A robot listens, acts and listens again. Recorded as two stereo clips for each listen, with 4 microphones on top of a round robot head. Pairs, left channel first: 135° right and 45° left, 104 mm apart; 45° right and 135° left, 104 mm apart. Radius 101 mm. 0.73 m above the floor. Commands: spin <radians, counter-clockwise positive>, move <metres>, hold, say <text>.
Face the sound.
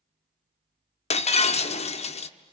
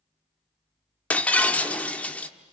spin -2.09
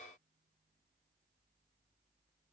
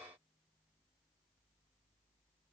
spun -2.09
say Facing where the breaking glass came from. I can't hear it now.